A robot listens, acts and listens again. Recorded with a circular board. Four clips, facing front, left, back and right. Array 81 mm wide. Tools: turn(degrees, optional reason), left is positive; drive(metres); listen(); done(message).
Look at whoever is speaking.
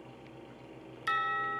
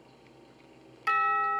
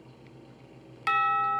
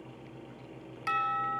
listen()
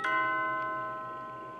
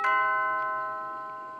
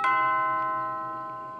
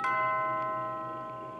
listen()
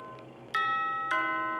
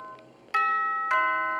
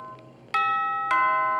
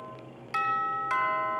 done("I can't make out anyone speaking to turn to.")